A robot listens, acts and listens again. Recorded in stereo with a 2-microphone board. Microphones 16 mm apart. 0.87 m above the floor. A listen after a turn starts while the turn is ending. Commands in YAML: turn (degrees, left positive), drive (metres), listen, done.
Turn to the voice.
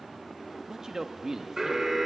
turn: -35
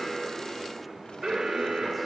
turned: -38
listen: true
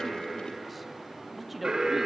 done: "Found it: a man speaking, straight ahead."